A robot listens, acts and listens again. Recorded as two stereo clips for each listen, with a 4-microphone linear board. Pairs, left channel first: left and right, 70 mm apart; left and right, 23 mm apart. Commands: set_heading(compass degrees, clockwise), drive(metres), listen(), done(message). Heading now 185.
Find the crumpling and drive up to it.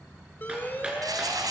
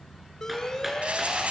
set_heading(250)
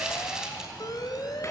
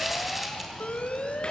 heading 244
set_heading(254)
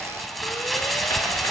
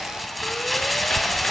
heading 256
drive(1.0)
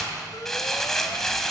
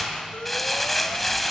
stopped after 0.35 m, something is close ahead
done("Blocked. The crumpling is further on, straight ahead.")